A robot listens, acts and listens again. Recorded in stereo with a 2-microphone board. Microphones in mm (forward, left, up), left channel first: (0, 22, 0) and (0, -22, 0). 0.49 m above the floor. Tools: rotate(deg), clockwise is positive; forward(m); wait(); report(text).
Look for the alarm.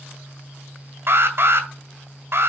rotate(60)
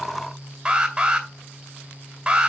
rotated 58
rotate(20)
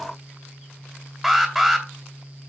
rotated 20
report("Facing the alarm, 2 to 4 m away.")